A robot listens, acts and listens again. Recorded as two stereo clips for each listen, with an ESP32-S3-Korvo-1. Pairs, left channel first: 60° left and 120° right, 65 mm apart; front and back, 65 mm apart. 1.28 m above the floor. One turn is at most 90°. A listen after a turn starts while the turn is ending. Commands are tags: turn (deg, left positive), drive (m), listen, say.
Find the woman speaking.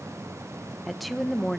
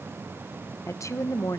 <turn deg="-20"/>
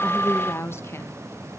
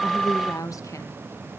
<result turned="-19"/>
<turn deg="20"/>
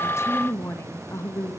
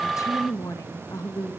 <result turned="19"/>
<turn deg="25"/>
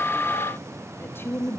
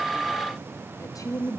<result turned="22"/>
<turn deg="10"/>
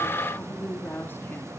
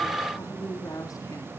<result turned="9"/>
<turn deg="10"/>
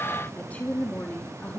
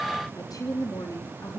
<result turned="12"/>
<say>Facing the woman speaking, 2 to 4 m away.</say>